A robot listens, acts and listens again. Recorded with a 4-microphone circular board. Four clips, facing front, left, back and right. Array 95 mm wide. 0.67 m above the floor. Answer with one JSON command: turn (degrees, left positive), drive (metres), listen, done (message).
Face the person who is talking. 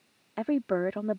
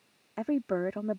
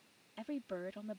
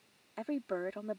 {"turn": 20}
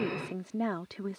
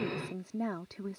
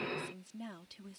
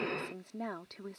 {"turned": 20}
{"done": "Facing the woman speaking."}